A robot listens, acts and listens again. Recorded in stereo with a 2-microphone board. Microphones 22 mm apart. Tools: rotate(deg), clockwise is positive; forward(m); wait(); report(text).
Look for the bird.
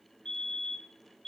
wait()
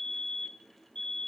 wait()
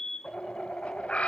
rotate(-70)
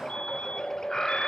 rotate(-30)
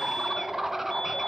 rotate(15)
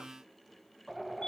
report("Facing the bird.")